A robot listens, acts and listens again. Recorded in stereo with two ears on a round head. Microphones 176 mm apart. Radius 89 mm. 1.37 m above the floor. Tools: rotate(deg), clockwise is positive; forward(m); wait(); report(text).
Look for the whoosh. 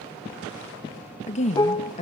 wait()
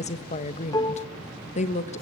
wait()
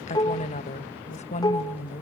report("I can't make out a whoosh to turn to.")